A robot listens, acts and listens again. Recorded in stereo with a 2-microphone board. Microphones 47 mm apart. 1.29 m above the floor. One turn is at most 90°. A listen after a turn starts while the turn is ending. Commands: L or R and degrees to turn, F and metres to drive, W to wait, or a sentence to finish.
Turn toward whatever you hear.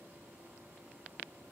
W
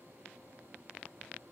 W
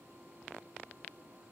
I can't make out anything to turn to.